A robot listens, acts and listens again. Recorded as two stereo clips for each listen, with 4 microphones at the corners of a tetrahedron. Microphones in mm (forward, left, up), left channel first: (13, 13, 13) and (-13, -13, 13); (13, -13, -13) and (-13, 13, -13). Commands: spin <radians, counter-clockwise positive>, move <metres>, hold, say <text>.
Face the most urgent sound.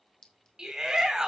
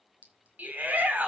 spin 2.71
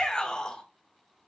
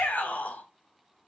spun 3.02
spin -0.26
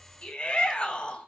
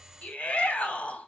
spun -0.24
say Found it: a shout, straight ahead.